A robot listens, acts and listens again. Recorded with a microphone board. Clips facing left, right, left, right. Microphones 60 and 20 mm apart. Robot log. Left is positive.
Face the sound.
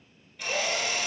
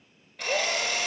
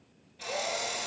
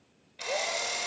note: The drill: about 75° right or 105° right.
cmd yaw -75
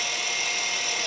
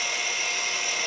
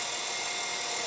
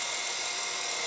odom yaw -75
note: So it is at 25° right.
cmd yaw -25
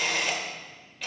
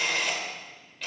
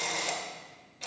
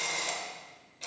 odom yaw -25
end: Found it: a drill, straight ahead, 1 to 2 m away.